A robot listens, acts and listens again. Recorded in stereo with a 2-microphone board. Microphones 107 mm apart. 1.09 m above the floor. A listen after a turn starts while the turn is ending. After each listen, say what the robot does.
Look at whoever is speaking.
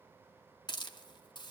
Keep listening.
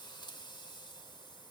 Keep listening.
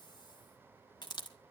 I can't make out anyone speaking to turn to.